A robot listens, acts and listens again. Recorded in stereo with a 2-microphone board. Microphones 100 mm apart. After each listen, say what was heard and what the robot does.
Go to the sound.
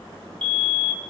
The fire alarm: about 55° right or 125° right. Turn 55° right.
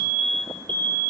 So it is at 65° right. Turn 65° right.
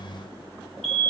Drive 1.0 m forward.
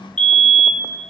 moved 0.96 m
The fire alarm is now 10° left. Turn 10° left.
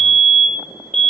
Drive 1.0 m forward.
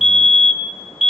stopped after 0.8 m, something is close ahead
Arrived at the fire alarm, straight ahead.